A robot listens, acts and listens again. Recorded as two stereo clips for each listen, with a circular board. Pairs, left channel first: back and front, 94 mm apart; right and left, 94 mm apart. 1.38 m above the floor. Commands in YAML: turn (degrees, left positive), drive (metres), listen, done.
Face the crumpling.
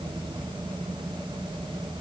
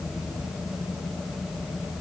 listen: true
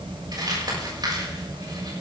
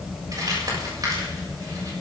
turn: 40
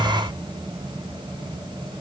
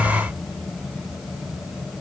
listen: true
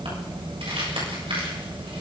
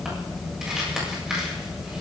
done: "Found it: crumpling, straight ahead."